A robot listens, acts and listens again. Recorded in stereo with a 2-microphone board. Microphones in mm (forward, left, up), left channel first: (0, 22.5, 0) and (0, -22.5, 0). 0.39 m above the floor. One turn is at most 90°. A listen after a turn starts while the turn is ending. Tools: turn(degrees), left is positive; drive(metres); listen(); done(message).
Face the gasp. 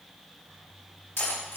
listen()
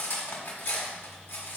listen()
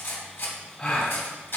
turn(degrees=20)
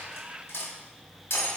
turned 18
listen()
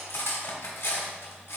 done("I heard a gasp, but can't make it out now. It was about 5° left or 140° left.")